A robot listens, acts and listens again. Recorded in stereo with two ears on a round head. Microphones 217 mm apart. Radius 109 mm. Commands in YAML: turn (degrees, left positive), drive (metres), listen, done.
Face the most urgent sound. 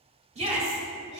turn: -30
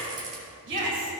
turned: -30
turn: -120
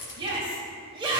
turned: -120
turn: -25
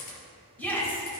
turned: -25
turn: 10
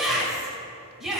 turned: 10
done: "Facing the shout."